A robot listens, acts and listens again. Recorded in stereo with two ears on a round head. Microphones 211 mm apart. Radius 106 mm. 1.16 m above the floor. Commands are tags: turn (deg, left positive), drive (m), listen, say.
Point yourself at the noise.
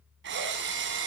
<turn deg="-55"/>
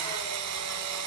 <turn deg="-75"/>
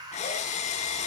<turn deg="30"/>
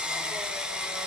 <say>Facing the drill.</say>